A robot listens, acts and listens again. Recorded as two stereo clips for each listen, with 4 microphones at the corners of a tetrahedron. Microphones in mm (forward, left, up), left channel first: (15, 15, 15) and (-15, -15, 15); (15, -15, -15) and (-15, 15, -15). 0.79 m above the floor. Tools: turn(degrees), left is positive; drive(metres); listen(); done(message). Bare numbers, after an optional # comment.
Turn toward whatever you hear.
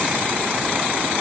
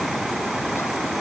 listen()
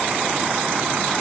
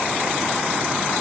listen()
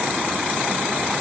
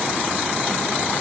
done("I can't make out anything.")